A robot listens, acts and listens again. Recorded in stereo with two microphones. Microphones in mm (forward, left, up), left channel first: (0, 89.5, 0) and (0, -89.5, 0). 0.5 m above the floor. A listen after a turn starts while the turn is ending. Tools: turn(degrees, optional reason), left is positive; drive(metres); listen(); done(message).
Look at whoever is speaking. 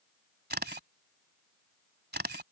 listen()
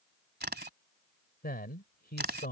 turn(degrees=60, reason="The man speaking: about 60° left or 120° left.")
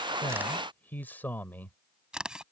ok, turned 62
turn(degrees=10, reason="So it is at 10° left.")
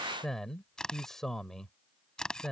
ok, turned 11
done("Facing the man speaking.")